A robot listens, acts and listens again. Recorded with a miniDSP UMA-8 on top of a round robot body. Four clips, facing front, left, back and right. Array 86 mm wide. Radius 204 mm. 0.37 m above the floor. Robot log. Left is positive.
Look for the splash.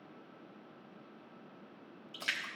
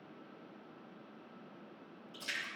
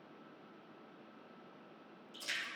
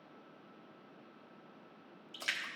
note: The splash: 40° right.
cmd yaw -40
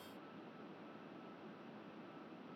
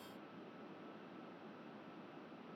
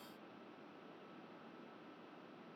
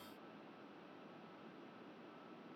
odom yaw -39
end: Facing where the splash came from. I can't hear it now.